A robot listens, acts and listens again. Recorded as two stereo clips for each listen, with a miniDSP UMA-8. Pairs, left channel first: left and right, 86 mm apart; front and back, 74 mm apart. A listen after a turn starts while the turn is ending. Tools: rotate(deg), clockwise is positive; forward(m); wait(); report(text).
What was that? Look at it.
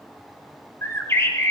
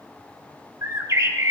rotate(-145)
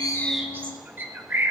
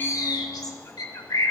rotate(25)
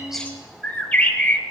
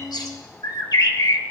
rotate(-20)
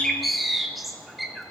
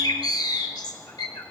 report("Found it: a bird, straight ahead.")